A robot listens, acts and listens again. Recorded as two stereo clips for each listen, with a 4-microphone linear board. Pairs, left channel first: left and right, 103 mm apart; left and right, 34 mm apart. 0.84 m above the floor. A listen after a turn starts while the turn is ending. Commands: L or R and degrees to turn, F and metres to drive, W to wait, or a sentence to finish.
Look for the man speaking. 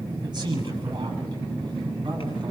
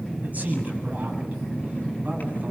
R45
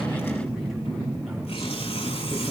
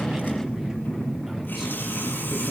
W
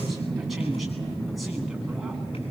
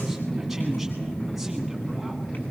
W
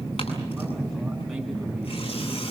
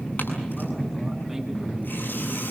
I heard a man speaking, but can't make it out now. It was about straight ahead or 90° right.